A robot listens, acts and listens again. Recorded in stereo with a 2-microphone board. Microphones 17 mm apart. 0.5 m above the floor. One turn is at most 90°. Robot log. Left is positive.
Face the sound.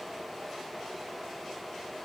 cmd idle
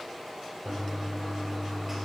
cmd yaw -30
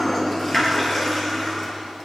note: So it is at 20° left.
cmd yaw +20
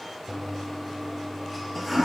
end: Facing the toilet flushing.